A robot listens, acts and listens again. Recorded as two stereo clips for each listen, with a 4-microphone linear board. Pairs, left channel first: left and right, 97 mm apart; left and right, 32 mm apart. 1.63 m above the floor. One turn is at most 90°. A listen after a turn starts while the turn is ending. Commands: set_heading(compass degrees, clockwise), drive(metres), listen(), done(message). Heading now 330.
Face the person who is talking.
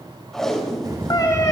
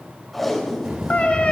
set_heading(20)
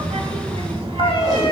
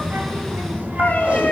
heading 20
set_heading(100)
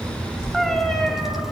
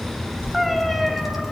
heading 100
done("Facing the child speaking.")